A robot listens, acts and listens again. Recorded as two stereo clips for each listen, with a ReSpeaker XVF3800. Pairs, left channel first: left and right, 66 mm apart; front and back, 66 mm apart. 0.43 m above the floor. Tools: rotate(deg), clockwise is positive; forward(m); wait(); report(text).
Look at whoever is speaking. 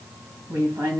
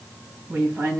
rotate(130)
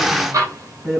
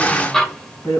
rotate(35)
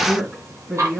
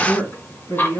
rotate(10)
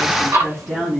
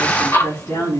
report("Found it: a woman speaking, straight ahead, 2 to 4 m away.")